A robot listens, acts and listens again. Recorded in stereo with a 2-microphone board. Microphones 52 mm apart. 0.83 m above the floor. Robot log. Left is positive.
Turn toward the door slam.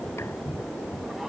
cmd idle
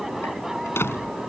note: The door slam: about 50° left or 130° left.
cmd yaw +50
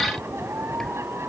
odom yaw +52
cmd idle
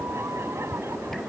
end: I heard a door slam, but can't make it out now. It was about straight ahead or 75° left.